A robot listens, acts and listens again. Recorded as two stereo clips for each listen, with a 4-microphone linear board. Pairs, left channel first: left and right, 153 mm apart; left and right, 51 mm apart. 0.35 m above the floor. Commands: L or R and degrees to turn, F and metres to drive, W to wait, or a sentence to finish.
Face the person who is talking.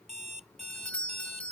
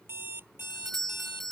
W
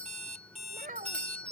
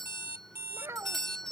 R60
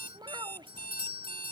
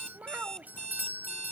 R35
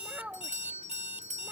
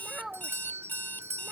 R10
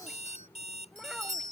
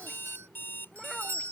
W
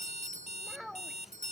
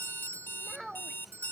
Facing the child speaking.